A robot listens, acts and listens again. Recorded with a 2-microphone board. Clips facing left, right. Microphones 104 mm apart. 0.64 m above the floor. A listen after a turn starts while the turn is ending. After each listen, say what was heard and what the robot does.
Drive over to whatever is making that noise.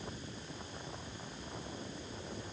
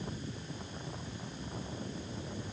Keep listening.
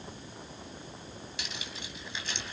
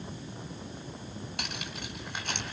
The cutlery clinking: about 60° right or 120° right. Turn 60° right.
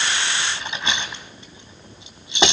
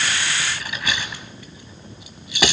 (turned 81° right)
So it is at 25° left. Turn 25° left.
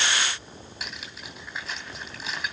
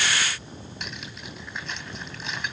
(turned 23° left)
Drive 1.0 m forward.
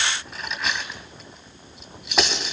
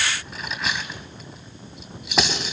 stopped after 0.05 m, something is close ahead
Something is in my way. I am facing the cutlery clinking but have not reached it.